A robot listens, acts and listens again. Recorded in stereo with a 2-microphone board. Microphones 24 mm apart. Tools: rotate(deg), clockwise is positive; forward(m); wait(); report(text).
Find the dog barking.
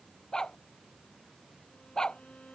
rotate(-30)
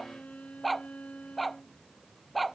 report("Facing the dog barking.")